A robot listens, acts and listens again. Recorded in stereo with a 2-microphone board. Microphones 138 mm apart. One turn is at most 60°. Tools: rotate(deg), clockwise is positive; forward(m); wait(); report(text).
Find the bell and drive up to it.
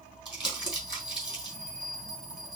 rotate(-30)
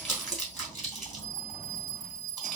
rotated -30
rotate(35)
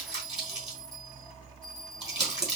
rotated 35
forward(1.0)
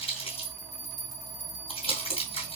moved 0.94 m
forward(1.0)
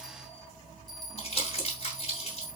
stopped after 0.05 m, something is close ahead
report("Arrived at the bell, straight ahead.")